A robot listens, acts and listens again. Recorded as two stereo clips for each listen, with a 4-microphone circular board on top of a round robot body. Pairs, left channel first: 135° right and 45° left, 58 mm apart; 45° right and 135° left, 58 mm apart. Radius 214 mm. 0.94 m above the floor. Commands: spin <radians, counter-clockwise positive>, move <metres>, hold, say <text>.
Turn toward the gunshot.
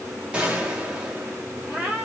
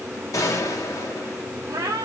spin -0.44
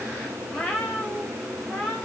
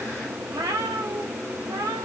say Facing where the gunshot came from. I can't hear it now.